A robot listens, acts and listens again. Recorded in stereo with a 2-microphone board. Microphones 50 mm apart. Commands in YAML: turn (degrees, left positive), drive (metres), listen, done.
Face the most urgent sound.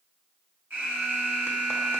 turn: -45
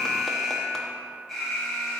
done: "Facing the alarm, 1 to 2 m away."